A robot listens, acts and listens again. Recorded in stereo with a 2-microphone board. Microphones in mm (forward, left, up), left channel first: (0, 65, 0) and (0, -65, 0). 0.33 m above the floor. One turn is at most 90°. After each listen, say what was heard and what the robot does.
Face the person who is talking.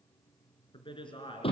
The man speaking: about 40° left or 140° left. Turn 40° left.
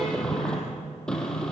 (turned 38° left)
Keep listening.
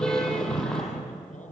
Keep listening.
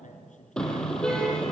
So it is at 100° left. Turn 90° left.
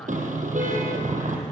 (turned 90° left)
Nothing new. It was at 10° left. Turn 10° left.
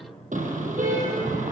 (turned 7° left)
Keep listening.
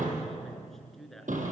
Facing the man speaking, over 4 m away.